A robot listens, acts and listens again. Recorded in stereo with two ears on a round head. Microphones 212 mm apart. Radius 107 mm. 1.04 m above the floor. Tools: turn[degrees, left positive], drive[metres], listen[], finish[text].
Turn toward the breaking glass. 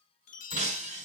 Thought: The breaking glass: about 35° right or 145° right.
Action: turn[-35]
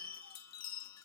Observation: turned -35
Action: listen[]
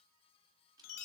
Action: finish[I heard breaking glass, but can't make it out now. It was about straight ahead or 110° right.]